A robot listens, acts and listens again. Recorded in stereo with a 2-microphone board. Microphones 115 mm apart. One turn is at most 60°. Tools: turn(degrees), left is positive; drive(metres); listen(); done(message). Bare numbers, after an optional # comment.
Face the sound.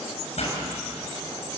# The pop: about 65° left or 115° left.
turn(60)
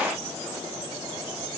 listen()
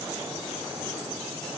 done("I heard a pop, but can't make it out now. It was about 5° left or 55° left.")